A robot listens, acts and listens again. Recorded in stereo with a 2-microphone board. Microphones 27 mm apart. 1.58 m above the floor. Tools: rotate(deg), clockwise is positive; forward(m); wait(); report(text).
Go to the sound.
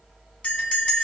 rotate(-50)
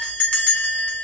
rotate(-70)
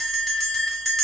forward(1.0)
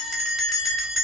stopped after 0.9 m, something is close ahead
rotate(-15)
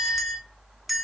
report("Arrived at the bell, straight ahead.")